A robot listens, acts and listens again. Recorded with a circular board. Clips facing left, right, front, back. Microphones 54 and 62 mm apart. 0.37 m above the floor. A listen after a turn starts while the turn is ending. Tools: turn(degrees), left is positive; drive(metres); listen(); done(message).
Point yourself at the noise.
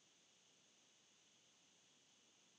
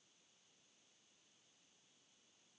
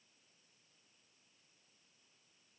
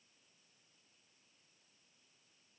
listen()
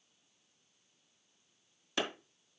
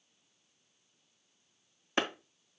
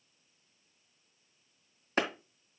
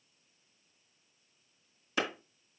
turn(degrees=-35)
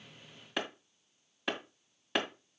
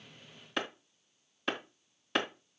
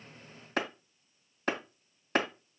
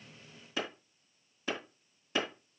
done("Found it: a clap, straight ahead.")